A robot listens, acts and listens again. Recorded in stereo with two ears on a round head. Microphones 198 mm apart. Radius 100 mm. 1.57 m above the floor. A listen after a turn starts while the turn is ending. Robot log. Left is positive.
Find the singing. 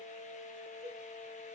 cmd idle
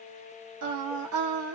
note: The singing: about 70° right or 110° right.
cmd yaw -70
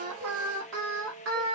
note: So it is at 65° right.
cmd yaw -65
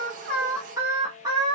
note: The singing is now 20° right.
cmd yaw -20
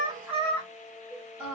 end: Facing the singing, 1 to 2 m away.